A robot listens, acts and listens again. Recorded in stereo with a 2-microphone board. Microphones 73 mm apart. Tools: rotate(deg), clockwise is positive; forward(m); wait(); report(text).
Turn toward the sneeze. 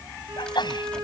rotate(-90)
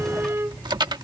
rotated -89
report("I heard a sneeze from this way, but can't make it out now.")